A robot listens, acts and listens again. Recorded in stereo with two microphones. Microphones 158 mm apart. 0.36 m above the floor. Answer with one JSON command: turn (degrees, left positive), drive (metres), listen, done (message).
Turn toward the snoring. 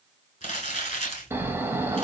{"turn": -30}
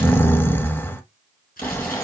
{"turn": 15}
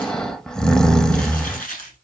{"done": "Found it: snoring, straight ahead, under 1 m away."}